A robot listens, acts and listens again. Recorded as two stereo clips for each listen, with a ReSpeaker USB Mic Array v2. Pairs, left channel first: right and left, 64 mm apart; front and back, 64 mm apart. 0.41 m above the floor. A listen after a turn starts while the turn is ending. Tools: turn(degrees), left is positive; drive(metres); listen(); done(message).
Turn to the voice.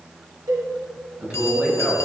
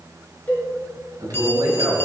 turn(degrees=160)
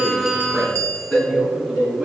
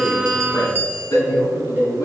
turn(degrees=-20)
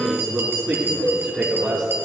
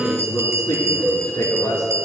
done("Found it: a man speaking, straight ahead, over 4 m away.")